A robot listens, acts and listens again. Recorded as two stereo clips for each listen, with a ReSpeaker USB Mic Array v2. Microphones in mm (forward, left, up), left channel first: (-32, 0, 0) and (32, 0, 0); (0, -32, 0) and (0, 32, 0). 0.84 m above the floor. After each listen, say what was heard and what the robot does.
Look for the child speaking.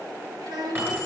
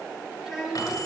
Found it: a child speaking, straight ahead.